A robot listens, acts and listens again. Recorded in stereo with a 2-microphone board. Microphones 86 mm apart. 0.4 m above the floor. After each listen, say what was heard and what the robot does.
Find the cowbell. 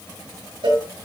Turn 90° right.
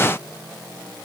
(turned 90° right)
Keep listening.
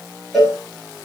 Found it: a cowbell, straight ahead, over 4 m away.